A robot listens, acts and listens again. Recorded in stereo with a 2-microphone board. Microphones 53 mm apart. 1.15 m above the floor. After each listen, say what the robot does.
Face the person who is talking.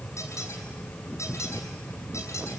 Keep listening.
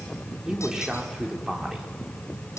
Turn 30° right.
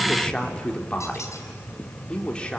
Turn 20° left.
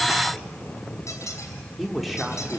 Found it: a man speaking, straight ahead.